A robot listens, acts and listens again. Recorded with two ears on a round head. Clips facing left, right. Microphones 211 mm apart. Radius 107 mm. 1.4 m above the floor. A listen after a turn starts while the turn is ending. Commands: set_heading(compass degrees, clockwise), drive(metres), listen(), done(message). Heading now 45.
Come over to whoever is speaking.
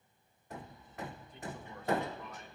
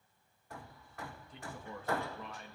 set_heading(110)
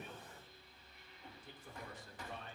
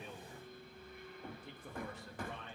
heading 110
set_heading(160)
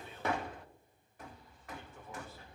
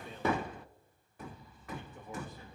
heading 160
set_heading(175)
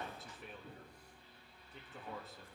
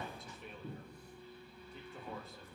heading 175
drive(1.0)
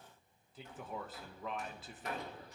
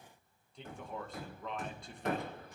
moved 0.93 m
drive(1.0)
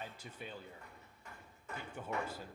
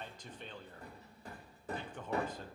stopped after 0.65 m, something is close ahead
done("Arrived at the man speaking, straight ahead.")